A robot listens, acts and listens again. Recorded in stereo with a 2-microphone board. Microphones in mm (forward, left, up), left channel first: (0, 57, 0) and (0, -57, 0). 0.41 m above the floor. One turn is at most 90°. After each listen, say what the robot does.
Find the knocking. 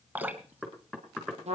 Turn 30° right.
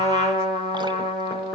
Keep listening.
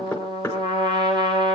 Turn 20° left.
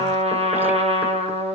Keep listening.
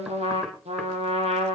Keep listening.
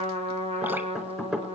Found it: knocking, straight ahead, 2 to 4 m away.